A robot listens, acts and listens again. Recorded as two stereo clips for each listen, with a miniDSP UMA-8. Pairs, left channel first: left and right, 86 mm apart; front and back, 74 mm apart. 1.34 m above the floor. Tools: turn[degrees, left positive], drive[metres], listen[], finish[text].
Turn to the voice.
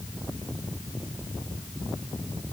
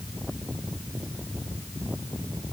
Action: listen[]
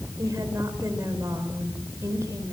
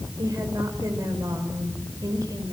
Thought: The woman speaking: 145° right.
Action: turn[-145]
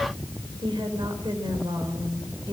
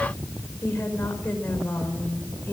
Thought: The woman speaking is now 65° right.
Action: turn[-65]
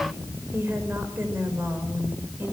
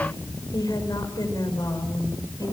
Thought: The woman speaking is now 25° right.
Action: turn[-25]
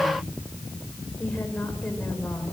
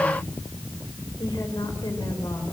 Thought: The woman speaking is now 15° left.
Action: turn[15]
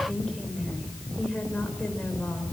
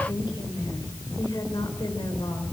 Thought: The woman speaking is now 10° left.
Action: turn[10]
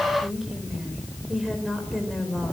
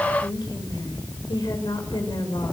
Action: finish[Found it: a woman speaking, straight ahead.]